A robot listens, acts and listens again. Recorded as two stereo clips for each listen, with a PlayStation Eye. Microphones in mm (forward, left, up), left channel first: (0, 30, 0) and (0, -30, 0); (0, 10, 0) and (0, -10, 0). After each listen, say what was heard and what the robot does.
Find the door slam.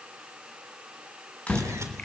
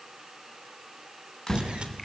The door slam: about 20° left or 160° left. Turn 20° left.
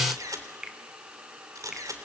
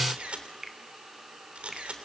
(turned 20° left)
Keep listening.
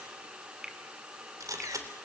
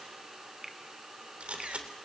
I heard a door slam, but can't make it out now. It was about straight ahead or 140° left.